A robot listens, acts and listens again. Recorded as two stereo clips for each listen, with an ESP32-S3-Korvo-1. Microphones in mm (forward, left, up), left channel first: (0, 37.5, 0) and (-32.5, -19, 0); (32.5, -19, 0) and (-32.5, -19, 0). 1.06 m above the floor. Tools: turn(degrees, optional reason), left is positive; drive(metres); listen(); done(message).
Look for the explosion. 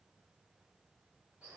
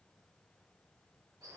listen()
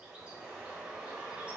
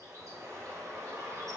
listen()
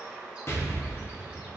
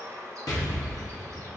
turn(degrees=15, reason="The explosion: 15° left.")
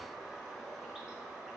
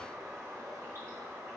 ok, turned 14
done("Facing where the explosion came from. I can't hear it now.")